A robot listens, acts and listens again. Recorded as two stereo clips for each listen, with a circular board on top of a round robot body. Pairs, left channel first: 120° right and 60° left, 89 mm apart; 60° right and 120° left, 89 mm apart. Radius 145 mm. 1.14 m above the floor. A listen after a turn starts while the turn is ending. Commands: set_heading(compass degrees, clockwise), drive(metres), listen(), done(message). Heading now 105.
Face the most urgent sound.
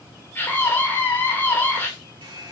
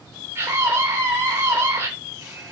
set_heading(290)
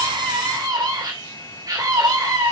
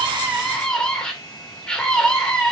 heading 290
set_heading(270)
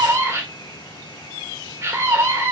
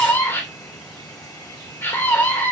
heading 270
done("Found it: a scream, straight ahead.")